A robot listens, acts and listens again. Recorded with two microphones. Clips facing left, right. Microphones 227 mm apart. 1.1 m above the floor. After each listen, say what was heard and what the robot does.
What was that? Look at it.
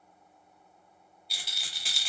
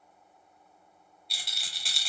Turn 30° left.
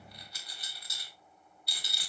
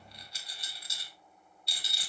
So it is at 25° right. Turn 25° right.
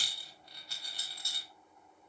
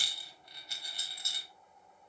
The rattle is now 20° right. Turn 20° right.
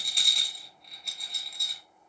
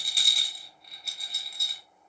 Found it: a rattle, straight ahead, 1 to 2 m away.